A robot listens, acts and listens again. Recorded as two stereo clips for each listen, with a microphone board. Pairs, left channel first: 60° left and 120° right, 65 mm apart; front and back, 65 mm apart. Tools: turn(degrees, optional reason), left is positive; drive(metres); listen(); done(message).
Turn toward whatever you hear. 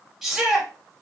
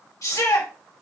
turn(degrees=-35, reason="The shout: 35° right.")
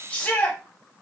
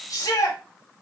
done("Facing the shout.")